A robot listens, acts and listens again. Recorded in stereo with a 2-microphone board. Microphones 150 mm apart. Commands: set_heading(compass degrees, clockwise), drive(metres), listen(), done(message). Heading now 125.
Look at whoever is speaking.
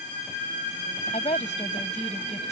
set_heading(75)
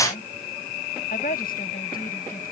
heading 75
set_heading(355)
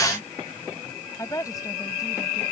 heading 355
set_heading(335)
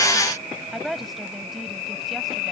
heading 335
done("Facing the woman speaking.")